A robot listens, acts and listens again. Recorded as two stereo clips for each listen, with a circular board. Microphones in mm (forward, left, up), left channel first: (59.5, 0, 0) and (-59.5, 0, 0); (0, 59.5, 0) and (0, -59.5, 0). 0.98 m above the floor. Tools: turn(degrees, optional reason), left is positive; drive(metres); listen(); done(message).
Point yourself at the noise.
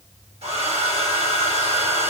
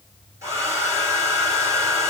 turn(degrees=-155, reason="The hair dryer: 155° right.")
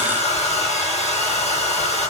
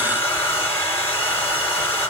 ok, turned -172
turn(degrees=20, reason="The hair dryer is now 20° left.")
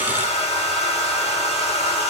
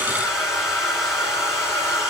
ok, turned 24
done("Found it: a hair dryer, straight ahead.")